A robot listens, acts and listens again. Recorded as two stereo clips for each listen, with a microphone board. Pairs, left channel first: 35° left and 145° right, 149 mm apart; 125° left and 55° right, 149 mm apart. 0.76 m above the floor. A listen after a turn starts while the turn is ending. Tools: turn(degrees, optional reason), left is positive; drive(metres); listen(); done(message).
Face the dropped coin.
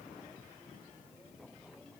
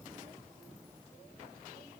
listen()
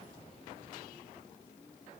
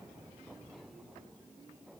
listen()
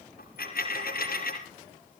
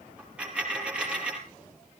turn(degrees=30, reason="The dropped coin: 30° left.")
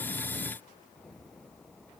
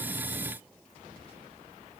done("Facing where the dropped coin came from. I can't hear it now.")